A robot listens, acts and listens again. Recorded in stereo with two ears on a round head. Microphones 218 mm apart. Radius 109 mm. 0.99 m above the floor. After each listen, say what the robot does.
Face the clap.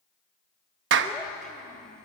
Turn 50° right.
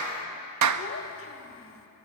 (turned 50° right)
Turn 75° right.
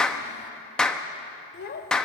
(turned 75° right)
Facing the clap.